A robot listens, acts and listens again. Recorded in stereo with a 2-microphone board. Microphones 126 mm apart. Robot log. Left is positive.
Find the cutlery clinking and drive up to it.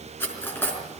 note: The cutlery clinking: about 15° left or 165° left.
cmd yaw +15
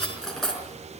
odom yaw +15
cmd fwd 1.0
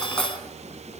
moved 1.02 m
cmd fwd 1.0
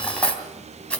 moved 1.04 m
note: The cutlery clinking is now 10° left.
cmd yaw +10
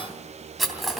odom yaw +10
cmd fwd 1.0
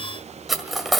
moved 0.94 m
cmd fwd 1.0
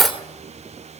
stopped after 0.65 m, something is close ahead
end: I am next to the cutlery clinking.